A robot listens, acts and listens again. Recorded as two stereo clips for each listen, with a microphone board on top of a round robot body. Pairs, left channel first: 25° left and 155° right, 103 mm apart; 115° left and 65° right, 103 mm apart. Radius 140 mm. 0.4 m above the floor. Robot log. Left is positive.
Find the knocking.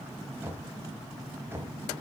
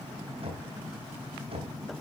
note: The knocking: 90° right.
cmd yaw -90
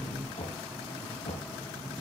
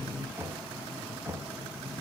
end: Found it: knocking, straight ahead, 2 to 4 m away.